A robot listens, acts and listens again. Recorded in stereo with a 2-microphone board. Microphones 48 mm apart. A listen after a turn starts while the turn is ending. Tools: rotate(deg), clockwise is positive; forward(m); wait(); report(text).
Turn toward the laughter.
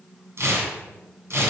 wait()
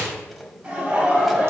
rotate(30)
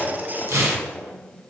wait()
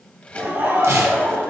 rotate(120)
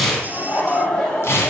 rotate(-30)
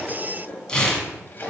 rotate(15)
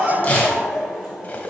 report("Facing the laughter.")